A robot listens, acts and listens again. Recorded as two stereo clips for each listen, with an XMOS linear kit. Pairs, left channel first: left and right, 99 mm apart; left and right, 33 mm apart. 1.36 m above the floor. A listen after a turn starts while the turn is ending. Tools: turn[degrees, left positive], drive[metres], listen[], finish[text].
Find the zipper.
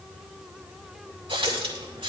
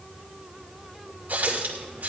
Action: listen[]
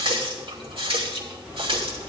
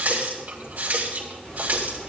Thought: The zipper: about 35° left or 145° left.
Action: turn[35]
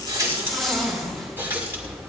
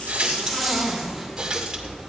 Action: finish[Found it: a zipper, straight ahead.]